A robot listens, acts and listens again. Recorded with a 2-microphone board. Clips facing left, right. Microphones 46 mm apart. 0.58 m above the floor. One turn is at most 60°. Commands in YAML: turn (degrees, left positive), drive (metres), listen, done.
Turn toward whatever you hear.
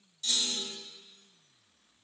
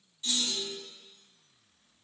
turn: -15
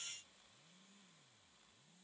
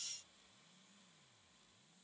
listen: true
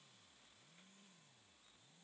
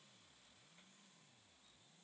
done: "I heard a clunk, but can't make it out now. It was about straight ahead or 150° right."